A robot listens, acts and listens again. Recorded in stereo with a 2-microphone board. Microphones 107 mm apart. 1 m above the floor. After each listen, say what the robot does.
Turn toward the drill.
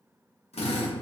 Turn 90° left.
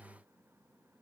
Keep listening.
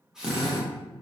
Facing the drill.